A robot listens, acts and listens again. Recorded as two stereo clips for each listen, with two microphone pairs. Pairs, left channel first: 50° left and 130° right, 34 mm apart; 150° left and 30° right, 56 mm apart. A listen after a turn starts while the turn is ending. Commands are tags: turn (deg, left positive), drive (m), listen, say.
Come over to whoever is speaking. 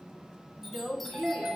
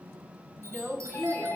<turn deg="-120"/>
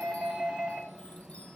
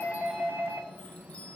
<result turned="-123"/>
<listen/>
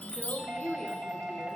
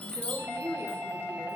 <drive m="1.0"/>
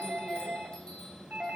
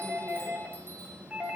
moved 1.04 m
<listen/>
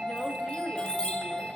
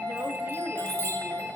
<listen/>
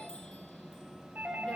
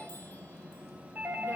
<say>Facing where the woman speaking came from. I can't hear it now. I did not reach it.</say>